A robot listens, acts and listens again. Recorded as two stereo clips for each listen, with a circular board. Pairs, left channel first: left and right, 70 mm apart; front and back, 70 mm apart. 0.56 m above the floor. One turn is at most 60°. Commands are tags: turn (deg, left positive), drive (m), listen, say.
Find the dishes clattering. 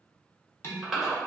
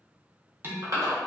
<turn deg="60"/>
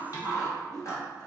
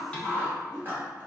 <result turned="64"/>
<turn deg="60"/>
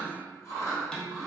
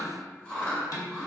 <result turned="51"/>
<turn deg="15"/>
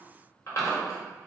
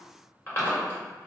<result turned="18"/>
<listen/>
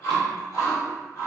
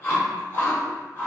<listen/>
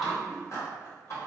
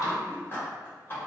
<say>I heard dishes clattering from this way, but can't make it out now.</say>